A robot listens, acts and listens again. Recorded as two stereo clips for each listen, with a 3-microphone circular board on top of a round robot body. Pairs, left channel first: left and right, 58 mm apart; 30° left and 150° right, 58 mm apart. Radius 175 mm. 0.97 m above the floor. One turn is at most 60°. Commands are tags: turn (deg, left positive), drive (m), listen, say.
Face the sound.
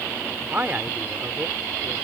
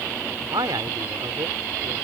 <turn deg="-60"/>
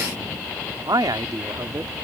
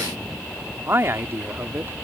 <turn deg="-60"/>
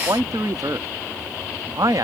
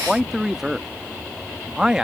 <turn deg="-60"/>
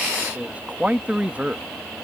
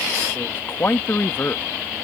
<turn deg="-20"/>
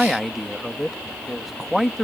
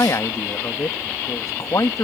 <say>Facing the man speaking.</say>